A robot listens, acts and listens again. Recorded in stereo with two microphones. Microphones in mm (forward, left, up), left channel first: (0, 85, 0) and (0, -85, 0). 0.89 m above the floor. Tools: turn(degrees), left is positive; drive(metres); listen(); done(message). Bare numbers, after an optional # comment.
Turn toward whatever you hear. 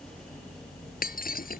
# The breaking glass: about 60° left or 120° left.
turn(60)
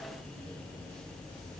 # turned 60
listen()
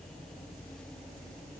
done("I heard breaking glass, but can't make it out now. It was about straight ahead or 60° left.")